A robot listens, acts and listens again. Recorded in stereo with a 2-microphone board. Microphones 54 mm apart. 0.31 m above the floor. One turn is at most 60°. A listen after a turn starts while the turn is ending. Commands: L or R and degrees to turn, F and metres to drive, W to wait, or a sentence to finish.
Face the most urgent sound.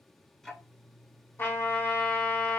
W
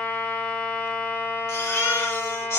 L60
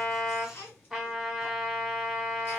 W
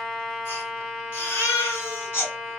L45
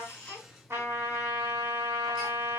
W
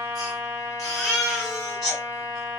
Found it: a baby crying, straight ahead.